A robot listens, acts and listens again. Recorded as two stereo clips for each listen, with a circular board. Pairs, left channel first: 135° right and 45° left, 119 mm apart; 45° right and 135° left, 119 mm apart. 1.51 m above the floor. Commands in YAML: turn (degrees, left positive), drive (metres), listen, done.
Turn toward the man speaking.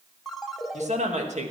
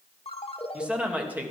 turn: 60
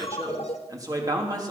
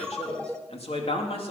turn: -10
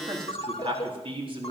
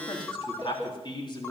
done: "Facing the man speaking, over 4 m away."